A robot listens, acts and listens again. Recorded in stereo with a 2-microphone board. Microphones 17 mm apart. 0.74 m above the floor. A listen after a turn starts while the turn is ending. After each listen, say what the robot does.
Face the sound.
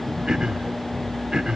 Turn 45° right.
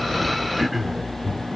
Found it: throat clearing, straight ahead.